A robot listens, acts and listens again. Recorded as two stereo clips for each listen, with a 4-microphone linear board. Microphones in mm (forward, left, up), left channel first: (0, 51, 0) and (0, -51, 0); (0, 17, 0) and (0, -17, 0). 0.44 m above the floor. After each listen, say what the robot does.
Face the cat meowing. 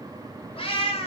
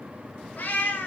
Turn 70° left.
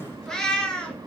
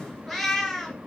Turn 10° left.
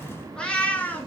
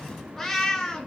Turn 20° left.
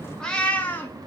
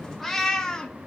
Turn 20° left.
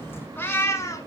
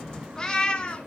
Turn 30° left.
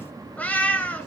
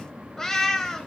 Turn 15° left.
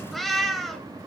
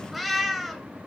Facing the cat meowing.